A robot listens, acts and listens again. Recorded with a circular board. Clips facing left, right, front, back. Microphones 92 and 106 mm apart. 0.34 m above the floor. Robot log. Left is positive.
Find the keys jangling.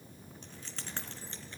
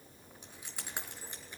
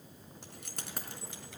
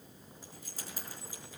note: The keys jangling: 15° right.
cmd yaw -15
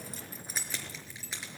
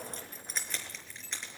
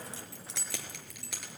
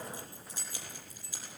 end: Found it: keys jangling, straight ahead, over 4 m away.